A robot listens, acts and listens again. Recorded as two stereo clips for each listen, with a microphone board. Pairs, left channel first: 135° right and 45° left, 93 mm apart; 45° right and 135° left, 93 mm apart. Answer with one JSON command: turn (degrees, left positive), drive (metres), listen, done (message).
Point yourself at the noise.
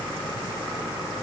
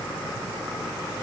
{"listen": true}
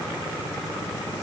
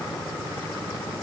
{"listen": true}
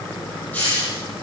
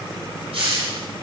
{"turn": 150}
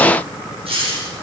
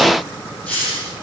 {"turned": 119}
{"turn": 30}
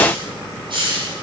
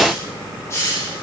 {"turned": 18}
{"turn": 15}
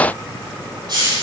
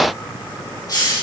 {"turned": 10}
{"done": "Found it: a hiss, straight ahead, over 4 m away."}